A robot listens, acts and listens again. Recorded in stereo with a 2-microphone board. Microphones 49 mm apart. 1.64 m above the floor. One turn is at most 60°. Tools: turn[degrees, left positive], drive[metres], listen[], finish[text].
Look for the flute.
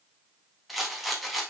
Action: listen[]
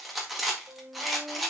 Thought: The flute: about 35° right or 145° right.
Action: turn[-35]
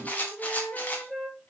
Action: finish[Found it: a flute, straight ahead.]